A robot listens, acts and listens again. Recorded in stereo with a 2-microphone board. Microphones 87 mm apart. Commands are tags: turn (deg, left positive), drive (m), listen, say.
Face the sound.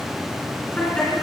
<turn deg="30"/>
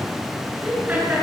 <turn deg="-20"/>
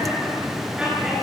<turn deg="-10"/>
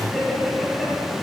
<say>Facing the laughter, over 4 m away.</say>